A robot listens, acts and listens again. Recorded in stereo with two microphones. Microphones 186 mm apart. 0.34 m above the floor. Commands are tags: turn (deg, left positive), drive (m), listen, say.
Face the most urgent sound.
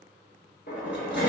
<listen/>
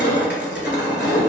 <listen/>
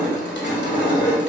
<say>I can't make out anything urgent, only crushing.</say>